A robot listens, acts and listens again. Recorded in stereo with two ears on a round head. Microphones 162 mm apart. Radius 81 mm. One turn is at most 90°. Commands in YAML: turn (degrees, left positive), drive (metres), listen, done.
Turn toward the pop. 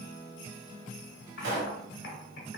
turn: -70
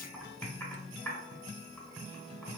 listen: true
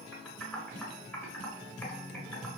done: "I heard a pop, but can't make it out now. It was about straight ahead or 40° right."